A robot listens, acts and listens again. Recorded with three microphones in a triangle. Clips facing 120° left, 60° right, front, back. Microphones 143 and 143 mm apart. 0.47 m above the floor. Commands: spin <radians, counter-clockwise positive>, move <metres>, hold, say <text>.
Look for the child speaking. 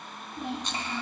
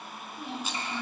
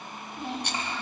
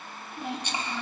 spin 1.83
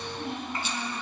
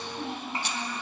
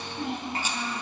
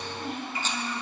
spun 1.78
say Facing the child speaking, 2 to 4 m away.